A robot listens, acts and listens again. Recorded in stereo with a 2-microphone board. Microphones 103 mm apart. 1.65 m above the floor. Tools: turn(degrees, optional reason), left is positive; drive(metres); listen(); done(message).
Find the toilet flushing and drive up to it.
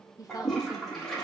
turn(degrees=30)
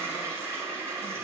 turn(degrees=-25, reason="So it is at 25° right.")
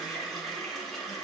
drive(metres=1.0)
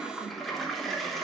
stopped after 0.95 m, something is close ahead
done("I am next to the toilet flushing.")